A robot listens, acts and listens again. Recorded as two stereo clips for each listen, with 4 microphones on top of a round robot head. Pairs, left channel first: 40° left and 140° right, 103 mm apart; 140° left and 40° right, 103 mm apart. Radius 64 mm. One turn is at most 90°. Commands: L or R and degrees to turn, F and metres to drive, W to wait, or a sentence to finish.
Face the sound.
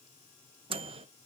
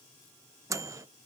R90
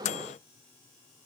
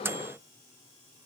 L30
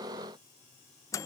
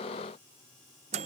R20
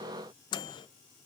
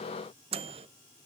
R10
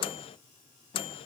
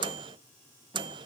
Found it: a microwave, straight ahead.